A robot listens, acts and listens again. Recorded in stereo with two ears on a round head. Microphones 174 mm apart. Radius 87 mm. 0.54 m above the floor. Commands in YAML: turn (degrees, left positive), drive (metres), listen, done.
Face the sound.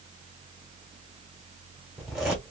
turn: -30
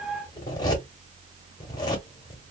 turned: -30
turn: 25
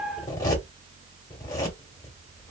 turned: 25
turn: 20
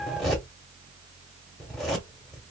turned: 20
done: "Found it: a zipper, straight ahead."